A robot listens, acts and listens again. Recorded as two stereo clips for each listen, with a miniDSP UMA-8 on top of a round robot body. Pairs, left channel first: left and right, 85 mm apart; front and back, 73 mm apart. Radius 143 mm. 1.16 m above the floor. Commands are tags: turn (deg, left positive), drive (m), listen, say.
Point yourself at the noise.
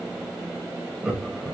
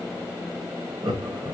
<turn deg="-170"/>
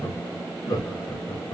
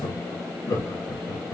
<turn deg="50"/>
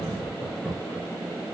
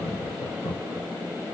<turn deg="10"/>
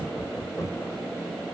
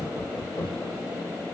<turn deg="10"/>
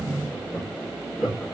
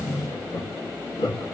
<say>Facing the laughter, 2 to 4 m away.</say>